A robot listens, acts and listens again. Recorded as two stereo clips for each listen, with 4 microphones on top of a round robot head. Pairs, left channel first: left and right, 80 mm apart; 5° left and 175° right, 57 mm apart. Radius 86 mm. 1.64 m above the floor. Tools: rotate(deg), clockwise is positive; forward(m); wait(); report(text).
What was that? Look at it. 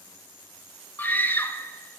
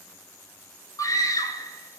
rotate(-20)
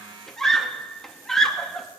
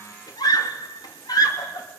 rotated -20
report("Found it: a scream, straight ahead.")